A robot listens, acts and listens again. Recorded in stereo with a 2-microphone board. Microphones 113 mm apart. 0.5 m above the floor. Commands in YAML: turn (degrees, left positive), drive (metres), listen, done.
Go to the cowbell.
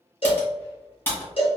turn: 55
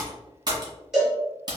drive: 1.0
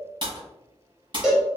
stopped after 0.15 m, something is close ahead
done: "Something is in my way. I am facing the cowbell but have not reached it."